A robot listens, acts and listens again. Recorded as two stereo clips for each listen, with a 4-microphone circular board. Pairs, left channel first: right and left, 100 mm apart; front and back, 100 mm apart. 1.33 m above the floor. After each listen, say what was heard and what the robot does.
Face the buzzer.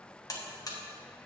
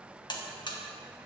The buzzer: 40° right. Turn 40° right.
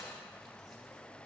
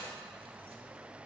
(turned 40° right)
Keep listening.
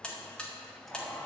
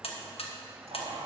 The buzzer is now 10° right. Turn 10° right.
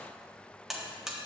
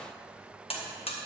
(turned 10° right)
Facing the buzzer, 1 to 2 m away.